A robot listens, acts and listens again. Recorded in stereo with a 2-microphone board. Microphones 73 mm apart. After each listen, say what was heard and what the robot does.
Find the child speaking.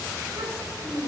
The child speaking: about 70° right or 110° right. Turn 70° right.
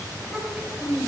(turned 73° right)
So it is at 20° right. Turn 20° right.
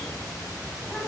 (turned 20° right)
Keep listening.
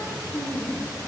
The child speaking is now 15° right. Turn 15° right.
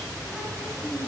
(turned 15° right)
Found it: a child speaking, straight ahead.